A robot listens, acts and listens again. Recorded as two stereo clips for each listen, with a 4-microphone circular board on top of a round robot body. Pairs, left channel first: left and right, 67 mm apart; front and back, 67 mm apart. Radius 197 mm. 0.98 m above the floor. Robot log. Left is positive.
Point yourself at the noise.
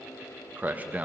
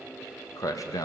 note: The man speaking: 20° right.
cmd yaw -20
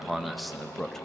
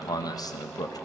end: Found it: a man speaking, straight ahead, 2 to 4 m away.